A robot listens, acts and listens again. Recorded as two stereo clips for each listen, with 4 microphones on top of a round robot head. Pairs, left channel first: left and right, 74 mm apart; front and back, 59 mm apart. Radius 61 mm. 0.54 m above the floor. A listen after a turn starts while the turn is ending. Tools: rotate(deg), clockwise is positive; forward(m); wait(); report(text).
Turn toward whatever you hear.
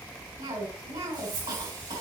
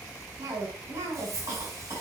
rotate(130)
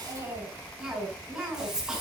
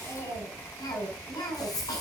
rotate(10)
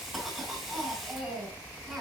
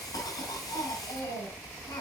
report("Facing the cough, 2 to 4 m away.")